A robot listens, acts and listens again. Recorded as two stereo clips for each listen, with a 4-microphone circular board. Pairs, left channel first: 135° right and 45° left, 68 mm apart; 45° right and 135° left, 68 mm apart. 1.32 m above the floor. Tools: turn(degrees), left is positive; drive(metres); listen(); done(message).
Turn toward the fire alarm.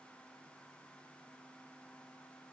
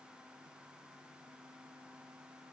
listen()
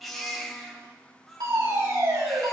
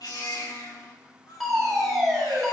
turn(degrees=45)
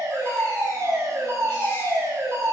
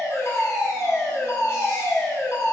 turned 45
done("Found it: a fire alarm, straight ahead, over 4 m away.")